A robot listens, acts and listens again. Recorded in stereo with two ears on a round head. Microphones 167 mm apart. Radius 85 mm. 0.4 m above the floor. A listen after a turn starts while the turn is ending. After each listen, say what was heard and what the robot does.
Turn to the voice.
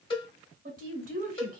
The woman speaking: about 50° right or 130° right. Turn 50° right.
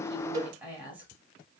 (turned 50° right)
So it is at 10° right. Turn 10° right.
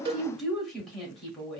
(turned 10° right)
Found it: a woman speaking, straight ahead, 1 to 2 m away.